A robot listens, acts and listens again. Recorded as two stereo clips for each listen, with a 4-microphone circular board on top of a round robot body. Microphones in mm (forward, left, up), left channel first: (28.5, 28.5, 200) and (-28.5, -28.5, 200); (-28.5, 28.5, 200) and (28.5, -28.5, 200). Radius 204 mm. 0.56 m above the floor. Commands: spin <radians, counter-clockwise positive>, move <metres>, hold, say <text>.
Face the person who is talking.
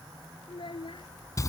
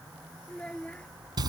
spin 1.05
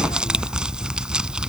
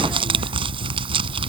hold
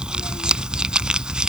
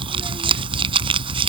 hold
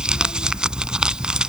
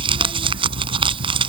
say I heard a child speaking from this way, but can't make it out now.